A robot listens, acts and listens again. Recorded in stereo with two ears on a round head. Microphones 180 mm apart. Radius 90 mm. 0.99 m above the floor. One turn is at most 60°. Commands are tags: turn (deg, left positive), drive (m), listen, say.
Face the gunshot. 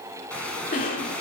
<turn deg="30"/>
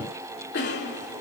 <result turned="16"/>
<listen/>
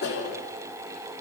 <say>I heard a gunshot, but can't make it out now. It was about 10° right or 155° left.</say>